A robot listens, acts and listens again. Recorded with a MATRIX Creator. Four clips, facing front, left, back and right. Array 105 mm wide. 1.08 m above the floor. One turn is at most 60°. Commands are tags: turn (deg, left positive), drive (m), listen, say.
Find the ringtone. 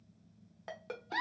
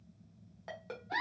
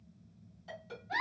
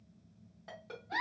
<turn deg="20"/>
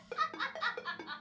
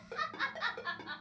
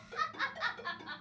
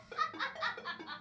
<turn deg="15"/>
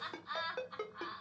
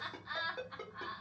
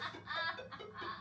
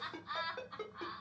<say>Found it: a ringtone, straight ahead, under 1 m away.</say>